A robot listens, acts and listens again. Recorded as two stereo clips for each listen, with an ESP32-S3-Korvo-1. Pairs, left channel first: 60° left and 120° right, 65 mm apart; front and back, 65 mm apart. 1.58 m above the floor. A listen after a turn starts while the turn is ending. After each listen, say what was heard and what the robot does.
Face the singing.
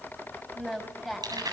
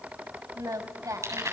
The singing: 155° left. Turn 155° left.
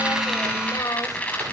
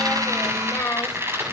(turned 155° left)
The singing is now 50° left. Turn 50° left.
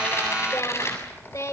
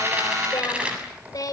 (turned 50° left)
The singing is now 25° left. Turn 25° left.
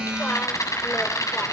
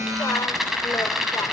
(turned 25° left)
Keep listening.
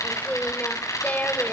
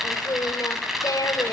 Found it: singing, straight ahead.